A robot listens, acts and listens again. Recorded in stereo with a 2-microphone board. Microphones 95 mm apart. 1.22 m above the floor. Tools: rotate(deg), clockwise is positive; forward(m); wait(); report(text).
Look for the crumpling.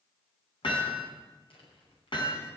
rotate(-75)
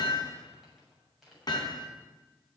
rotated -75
report("Found it: crumpling, straight ahead, over 4 m away.")